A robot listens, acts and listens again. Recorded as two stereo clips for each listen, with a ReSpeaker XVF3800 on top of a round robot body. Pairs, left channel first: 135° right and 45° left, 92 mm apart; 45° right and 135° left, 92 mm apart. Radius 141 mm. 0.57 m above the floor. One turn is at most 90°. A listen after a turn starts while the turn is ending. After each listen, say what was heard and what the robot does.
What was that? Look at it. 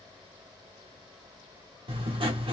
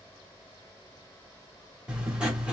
The writing: 55° left. Turn 55° left.
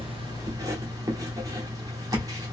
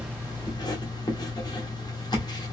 Found it: writing, straight ahead.